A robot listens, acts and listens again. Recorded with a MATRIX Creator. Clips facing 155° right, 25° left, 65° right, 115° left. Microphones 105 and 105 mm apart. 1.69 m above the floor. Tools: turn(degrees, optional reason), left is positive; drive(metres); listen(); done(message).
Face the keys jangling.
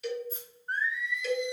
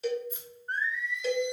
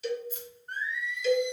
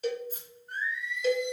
turn(degrees=150, reason="The keys jangling: 150° left.")
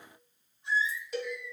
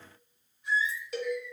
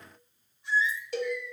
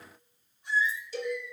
listen()
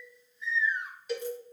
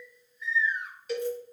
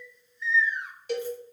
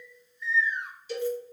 listen()
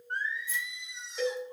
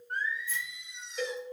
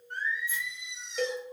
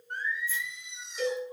done("Facing where the keys jangling came from. I can't hear it now.")